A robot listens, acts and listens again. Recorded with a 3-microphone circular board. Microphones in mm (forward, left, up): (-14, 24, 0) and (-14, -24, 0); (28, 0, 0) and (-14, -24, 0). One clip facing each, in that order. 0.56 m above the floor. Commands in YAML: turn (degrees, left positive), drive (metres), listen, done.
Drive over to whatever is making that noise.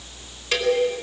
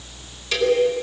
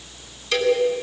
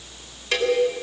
turn: 165
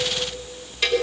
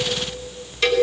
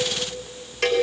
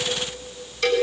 turn: 15
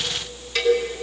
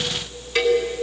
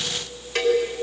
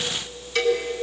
drive: 1.0
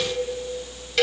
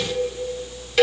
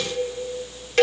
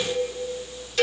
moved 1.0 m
drive: 1.0
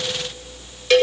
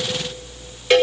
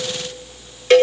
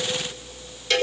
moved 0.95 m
turn: -10
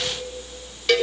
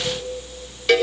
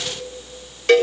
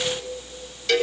drive: 1.0
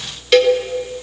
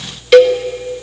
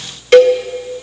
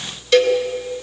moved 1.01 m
drive: 1.0
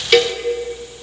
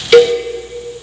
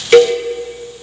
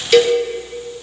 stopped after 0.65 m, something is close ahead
done: "Arrived at the cowbell, straight ahead."